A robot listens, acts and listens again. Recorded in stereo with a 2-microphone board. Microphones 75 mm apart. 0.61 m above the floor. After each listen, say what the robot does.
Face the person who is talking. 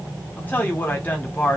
Turn 25° left.
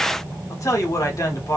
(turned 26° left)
Turn 125° left.
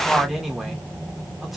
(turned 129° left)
Found it: a man speaking, straight ahead.